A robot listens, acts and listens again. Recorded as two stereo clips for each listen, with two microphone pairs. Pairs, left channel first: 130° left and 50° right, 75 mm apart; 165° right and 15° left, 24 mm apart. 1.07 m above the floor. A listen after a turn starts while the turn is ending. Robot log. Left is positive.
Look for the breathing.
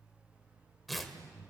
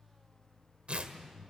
note: The breathing: 30° right.
cmd yaw -30
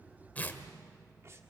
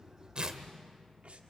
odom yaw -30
cmd idle
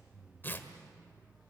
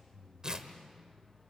end: Facing the breathing, 1 to 2 m away.